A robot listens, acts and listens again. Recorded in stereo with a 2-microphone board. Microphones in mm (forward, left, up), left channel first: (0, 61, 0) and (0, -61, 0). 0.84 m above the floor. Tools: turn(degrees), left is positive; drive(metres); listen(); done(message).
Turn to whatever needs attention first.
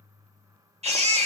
turn(degrees=-60)
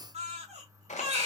turn(degrees=-60)
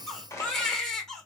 done("Found it: a baby crying, straight ahead, 1 to 2 m away.")